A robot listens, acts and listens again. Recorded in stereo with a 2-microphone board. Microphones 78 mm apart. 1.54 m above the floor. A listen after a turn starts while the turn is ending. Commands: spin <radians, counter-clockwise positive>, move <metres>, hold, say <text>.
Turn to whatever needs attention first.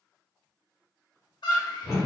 spin 1.22
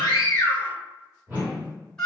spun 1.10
spin 0.17
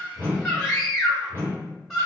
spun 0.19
say Found it: a scream, straight ahead, 1 to 2 m away.